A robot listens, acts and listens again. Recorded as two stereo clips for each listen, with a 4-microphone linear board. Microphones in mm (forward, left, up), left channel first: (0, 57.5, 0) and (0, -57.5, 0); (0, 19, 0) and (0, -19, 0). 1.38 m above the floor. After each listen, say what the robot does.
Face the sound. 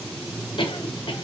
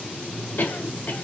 Turn 50° left.
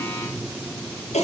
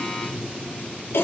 Turn 80° left.
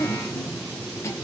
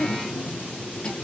Turn 25° left.
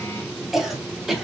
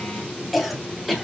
Found it: a cough, straight ahead, 1 to 2 m away.